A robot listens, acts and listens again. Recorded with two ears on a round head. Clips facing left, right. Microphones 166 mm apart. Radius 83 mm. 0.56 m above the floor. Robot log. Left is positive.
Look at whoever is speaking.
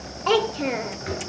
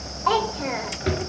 note: The child speaking: about 35° left or 145° left.
cmd yaw +35
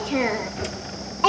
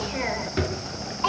note: So it is at 105° left.
cmd yaw +105
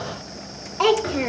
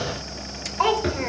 note: The child speaking is now 45° left.
cmd yaw +45
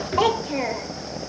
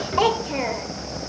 end: Found it: a child speaking, straight ahead.